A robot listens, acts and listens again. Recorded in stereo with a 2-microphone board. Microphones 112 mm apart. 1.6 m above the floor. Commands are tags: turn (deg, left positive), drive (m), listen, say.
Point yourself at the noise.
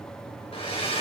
<turn deg="60"/>
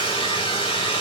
<turn deg="50"/>
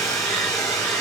<say>Facing the hair dryer.</say>